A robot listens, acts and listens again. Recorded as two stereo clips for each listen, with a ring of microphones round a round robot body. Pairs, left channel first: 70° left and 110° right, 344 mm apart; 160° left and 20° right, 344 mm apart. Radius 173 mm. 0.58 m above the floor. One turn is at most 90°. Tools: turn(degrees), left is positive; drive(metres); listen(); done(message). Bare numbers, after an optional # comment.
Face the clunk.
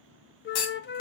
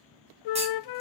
# The clunk: 50° left.
turn(50)
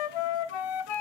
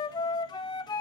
done("I heard a clunk from this way, but can't make it out now.")